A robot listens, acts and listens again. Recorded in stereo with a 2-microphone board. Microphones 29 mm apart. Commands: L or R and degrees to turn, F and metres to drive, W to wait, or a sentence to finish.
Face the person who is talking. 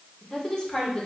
L25
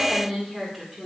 Found it: a woman speaking, straight ahead, over 4 m away.